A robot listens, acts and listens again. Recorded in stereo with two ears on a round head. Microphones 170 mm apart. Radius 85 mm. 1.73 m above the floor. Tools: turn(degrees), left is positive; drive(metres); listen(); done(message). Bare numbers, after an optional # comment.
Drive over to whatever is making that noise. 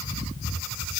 listen()
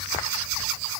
listen()
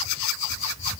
done("I can't make out anything to turn to.")